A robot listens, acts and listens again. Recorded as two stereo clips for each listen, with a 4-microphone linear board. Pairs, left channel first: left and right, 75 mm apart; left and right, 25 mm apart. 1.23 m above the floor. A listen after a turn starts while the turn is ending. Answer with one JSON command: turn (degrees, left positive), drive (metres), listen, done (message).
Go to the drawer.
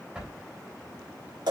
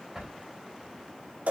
{"turn": -30}
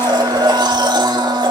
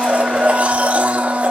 {"listen": true}
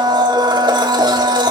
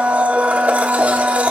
{"listen": true}
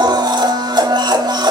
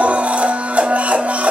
{"done": "I heard a drawer, but can't make it out now. It was about 20° left or 140° right. I did not reach it."}